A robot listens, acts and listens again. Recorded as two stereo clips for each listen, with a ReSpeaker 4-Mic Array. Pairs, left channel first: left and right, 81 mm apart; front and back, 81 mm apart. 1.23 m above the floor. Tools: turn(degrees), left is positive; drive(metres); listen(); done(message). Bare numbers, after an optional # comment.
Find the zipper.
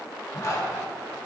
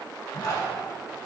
# The zipper: 40° left.
turn(40)
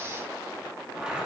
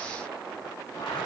# The zipper is now 10° right.
turn(-10)
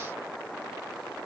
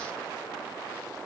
listen()
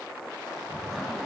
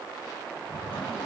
done("Facing the zipper, 1 to 2 m away.")